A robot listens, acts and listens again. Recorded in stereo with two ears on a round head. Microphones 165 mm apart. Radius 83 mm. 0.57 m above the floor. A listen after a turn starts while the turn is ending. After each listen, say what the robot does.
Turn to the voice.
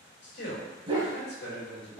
Turn 60° left.
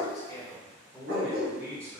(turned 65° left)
Turn 20° right.
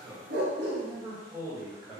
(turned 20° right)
Turn 20° right.
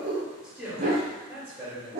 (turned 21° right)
Turn 15° right.
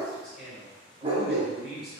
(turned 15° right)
Facing the man speaking.